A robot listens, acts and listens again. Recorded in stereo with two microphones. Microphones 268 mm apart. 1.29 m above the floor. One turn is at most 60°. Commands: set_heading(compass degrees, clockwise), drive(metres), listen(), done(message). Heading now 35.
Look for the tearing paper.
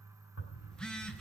set_heading(335)
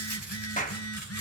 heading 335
set_heading(295)
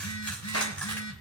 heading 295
done("Facing the tearing paper, over 4 m away.")